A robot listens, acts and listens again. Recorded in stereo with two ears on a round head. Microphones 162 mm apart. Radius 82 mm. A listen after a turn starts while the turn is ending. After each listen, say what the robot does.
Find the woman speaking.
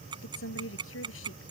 Turn 90° left.
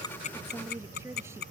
Keep listening.
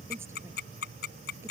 Keep listening.
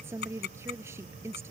Turn 15° right.
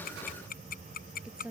Found it: a woman speaking, straight ahead.